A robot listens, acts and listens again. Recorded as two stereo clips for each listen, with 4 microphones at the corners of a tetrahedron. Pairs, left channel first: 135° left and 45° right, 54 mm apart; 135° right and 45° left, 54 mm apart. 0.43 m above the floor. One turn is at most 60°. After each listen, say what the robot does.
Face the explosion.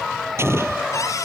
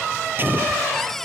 Facing the explosion.